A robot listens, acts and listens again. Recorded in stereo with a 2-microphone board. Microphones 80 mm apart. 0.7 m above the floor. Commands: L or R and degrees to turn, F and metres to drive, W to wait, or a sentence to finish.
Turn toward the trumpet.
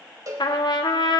L65
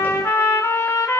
L35
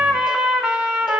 R10
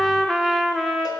Found it: a trumpet, straight ahead, 1 to 2 m away.